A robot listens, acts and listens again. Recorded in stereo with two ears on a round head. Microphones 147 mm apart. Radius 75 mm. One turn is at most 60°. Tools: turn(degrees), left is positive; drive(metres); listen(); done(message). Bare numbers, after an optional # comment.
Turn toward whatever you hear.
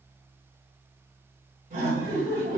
# The laughter: about 55° right or 125° right.
turn(-55)
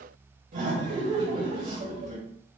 # So it is at 55° right.
turn(-55)
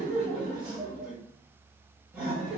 # The laughter is now 10° right.
turn(-10)
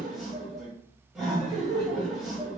done("Facing the laughter, 1 to 2 m away.")